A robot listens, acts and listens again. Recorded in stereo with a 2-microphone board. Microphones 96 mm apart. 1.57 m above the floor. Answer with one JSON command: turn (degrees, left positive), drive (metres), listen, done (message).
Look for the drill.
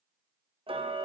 {"listen": true}
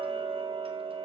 {"listen": true}
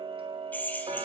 {"turn": 15}
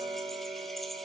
{"listen": true}
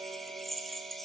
{"done": "Facing the drill."}